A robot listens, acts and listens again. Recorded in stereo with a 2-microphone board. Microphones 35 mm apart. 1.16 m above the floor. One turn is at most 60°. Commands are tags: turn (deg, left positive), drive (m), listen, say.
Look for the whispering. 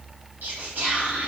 <turn deg="-60"/>
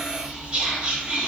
<turn deg="-35"/>
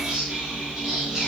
<turn deg="-15"/>
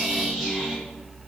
<say>Found it: whispering, straight ahead, under 1 m away.</say>